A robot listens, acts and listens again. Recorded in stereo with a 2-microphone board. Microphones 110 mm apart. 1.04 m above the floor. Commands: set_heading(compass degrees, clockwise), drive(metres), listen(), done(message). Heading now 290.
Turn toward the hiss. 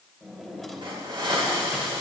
set_heading(345)
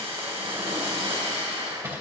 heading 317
set_heading(57)
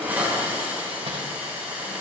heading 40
set_heading(55)
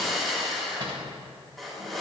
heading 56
done("Facing the hiss, over 4 m away.")